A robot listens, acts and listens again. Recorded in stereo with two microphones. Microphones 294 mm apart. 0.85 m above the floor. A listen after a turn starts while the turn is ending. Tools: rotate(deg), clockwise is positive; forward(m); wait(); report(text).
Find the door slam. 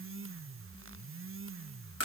wait()
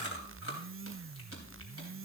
wait()
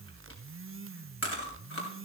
report("I can't make out a door slam, only chewing.")